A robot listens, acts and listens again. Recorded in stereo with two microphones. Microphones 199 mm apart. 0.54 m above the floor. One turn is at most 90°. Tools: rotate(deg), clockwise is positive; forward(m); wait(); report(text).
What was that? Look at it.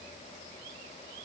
wait()
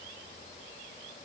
wait()
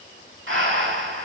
rotate(90)
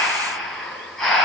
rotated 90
report("Found it: breathing, straight ahead.")